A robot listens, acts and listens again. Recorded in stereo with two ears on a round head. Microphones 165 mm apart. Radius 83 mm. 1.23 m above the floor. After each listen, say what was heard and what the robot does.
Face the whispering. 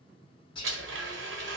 The whispering: about 25° left or 155° left. Turn 25° left.
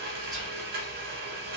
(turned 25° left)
Keep listening.
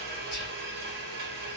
Keep listening.
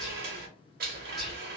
Facing the whispering.